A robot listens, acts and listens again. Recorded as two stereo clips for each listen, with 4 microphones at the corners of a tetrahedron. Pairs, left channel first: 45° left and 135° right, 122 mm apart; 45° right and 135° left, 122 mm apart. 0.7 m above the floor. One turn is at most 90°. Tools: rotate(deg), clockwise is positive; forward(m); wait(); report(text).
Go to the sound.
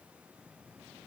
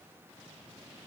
wait()
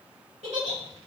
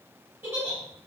rotate(90)
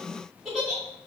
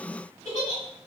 rotate(50)
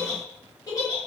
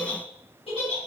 rotate(15)
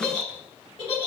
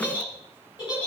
forward(1.0)
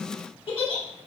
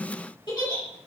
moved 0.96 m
forward(1.0)
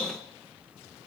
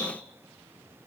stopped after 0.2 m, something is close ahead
wait()
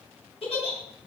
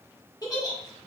rotate(-10)
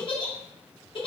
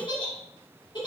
report("Arrived at the giggle, straight ahead.")